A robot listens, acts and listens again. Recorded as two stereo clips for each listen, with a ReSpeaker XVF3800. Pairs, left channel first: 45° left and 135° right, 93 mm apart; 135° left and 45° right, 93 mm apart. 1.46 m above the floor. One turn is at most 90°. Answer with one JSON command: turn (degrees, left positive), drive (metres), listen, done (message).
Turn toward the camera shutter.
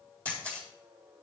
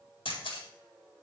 {"turn": 90}
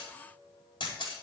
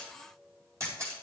{"turn": 10}
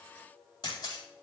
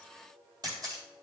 {"done": "Facing the camera shutter."}